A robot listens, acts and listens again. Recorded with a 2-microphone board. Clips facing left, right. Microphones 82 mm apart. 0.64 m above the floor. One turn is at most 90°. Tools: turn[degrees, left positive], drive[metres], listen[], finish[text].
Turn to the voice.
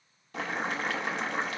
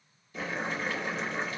Action: listen[]
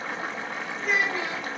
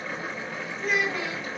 Thought: The child speaking: about 40° left or 140° left.
Action: turn[40]
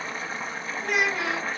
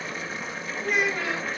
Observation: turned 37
Thought: So it is at 105° left.
Action: turn[90]
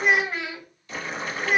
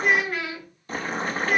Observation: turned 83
Thought: The child speaking is now 20° left.
Action: turn[20]
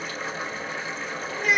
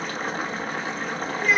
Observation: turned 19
Action: finish[Facing the child speaking.]